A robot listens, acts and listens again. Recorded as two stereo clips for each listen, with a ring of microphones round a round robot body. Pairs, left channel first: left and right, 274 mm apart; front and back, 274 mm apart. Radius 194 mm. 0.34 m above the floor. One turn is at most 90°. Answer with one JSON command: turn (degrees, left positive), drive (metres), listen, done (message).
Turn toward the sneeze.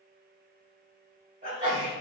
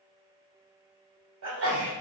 {"turn": -90}
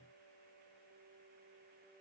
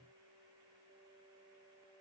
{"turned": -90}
{"turn": -60}
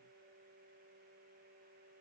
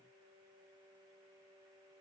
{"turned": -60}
{"done": "I heard a sneeze from this way, but can't make it out now."}